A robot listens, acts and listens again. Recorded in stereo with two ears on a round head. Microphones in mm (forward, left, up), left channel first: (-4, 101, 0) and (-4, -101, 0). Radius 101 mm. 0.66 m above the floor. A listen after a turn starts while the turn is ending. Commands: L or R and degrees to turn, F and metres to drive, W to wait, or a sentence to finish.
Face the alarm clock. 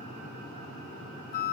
W
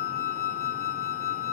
W
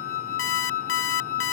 L60
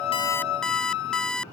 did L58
Facing the alarm clock.